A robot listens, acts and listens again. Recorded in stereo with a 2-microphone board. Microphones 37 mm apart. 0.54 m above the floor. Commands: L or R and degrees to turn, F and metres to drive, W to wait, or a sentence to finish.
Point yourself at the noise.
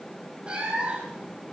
R25
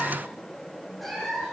Found it: a cat meowing, straight ahead.